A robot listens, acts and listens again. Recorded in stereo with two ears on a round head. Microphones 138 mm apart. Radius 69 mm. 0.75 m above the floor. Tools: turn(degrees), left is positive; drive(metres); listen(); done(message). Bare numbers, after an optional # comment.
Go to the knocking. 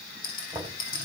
# The knocking: about 15° right or 165° right.
turn(-15)
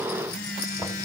listen()
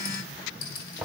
drive(1.0)
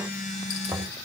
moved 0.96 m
drive(1.0)
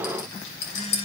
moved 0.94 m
listen()
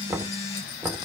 # The knocking is now 15° right.
turn(-15)
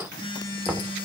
drive(1.0)
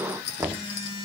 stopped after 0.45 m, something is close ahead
# The knocking is now 10° right.
turn(-10)
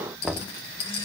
done("I am next to the knocking.")